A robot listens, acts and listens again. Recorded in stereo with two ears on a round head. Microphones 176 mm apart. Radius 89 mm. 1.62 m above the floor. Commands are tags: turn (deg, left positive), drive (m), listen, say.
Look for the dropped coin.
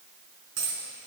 <turn deg="-65"/>
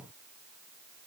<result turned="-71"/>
<listen/>
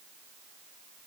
<say>I heard a dropped coin, but can't make it out now. It was about 5° left or 40° right.</say>